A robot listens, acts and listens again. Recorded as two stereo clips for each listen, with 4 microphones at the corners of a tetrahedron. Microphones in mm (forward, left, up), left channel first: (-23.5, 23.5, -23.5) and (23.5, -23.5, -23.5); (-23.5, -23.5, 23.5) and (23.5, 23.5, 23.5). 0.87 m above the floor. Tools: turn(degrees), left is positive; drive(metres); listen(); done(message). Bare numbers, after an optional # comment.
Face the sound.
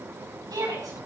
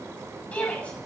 # The shout: 65° right.
turn(-65)
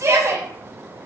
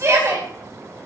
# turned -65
done("Facing the shout.")